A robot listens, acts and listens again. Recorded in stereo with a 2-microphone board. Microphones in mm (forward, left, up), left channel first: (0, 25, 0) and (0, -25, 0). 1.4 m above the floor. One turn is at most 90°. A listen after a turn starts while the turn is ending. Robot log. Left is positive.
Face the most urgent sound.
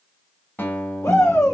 cmd yaw +90
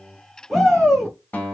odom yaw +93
end: Facing the shout.